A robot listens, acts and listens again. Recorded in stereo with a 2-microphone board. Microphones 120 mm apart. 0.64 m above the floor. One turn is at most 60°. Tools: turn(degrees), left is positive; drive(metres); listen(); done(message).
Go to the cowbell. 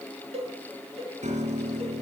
turn(degrees=-55)
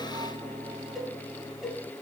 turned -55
drive(metres=1.0)
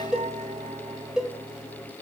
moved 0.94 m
drive(metres=1.0)
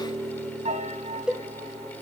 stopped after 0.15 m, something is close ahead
done("Arrived at the cowbell, straight ahead.")